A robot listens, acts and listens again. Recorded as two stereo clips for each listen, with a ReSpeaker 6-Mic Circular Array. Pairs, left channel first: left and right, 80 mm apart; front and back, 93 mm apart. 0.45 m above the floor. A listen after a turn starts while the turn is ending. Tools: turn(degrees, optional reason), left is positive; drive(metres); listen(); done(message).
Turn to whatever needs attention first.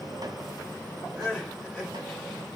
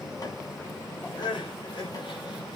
done("Found it: crying, straight ahead.")